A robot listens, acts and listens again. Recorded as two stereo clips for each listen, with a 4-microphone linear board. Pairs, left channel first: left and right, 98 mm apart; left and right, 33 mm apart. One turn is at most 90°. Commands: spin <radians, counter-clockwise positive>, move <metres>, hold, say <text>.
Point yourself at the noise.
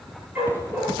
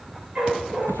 spin -0.35
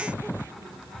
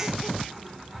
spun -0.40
hold
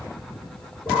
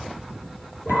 spin -0.52
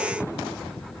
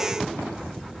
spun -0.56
hold
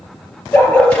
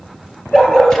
spin 0.26
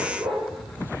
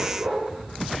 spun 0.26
say Facing the dog barking, 2 to 4 m away.